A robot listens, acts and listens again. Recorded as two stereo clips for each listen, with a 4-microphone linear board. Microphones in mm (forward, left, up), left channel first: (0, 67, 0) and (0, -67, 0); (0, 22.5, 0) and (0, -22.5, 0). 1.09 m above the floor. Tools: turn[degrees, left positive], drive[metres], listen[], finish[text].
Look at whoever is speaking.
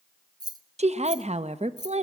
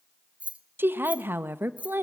Thought: The woman speaking: about 55° right or 125° right.
Action: turn[-55]
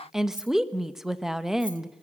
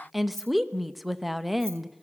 Action: finish[Facing the woman speaking, 1 to 2 m away.]